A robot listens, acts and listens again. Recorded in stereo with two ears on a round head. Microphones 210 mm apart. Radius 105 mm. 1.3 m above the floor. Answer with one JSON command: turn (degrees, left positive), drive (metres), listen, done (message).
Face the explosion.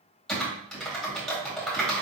{"listen": true}
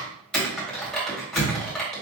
{"turn": 40}
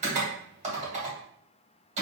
{"listen": true}
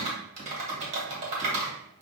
{"done": "I heard an explosion, but can't make it out now. It was about straight ahead or 100° left."}